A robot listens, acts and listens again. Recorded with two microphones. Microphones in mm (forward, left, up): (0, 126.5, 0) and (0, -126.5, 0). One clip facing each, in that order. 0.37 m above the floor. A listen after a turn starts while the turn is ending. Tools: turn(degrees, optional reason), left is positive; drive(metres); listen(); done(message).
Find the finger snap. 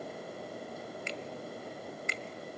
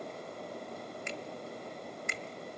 turn(degrees=-55, reason="The finger snap: about 55° right or 125° right.")
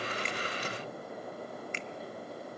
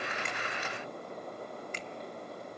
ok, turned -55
turn(degrees=-55, reason="So it is at 55° right.")
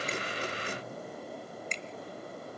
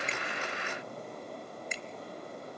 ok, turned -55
turn(degrees=-10, reason="The finger snap is now 10° right.")
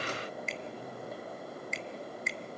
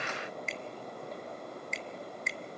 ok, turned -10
done("Found it: a finger snap, straight ahead.")